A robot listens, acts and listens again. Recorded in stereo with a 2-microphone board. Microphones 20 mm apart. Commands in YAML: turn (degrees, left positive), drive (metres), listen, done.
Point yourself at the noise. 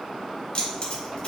turn: 40
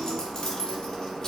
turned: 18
turn: 25
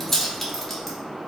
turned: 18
done: "Facing the keys jangling."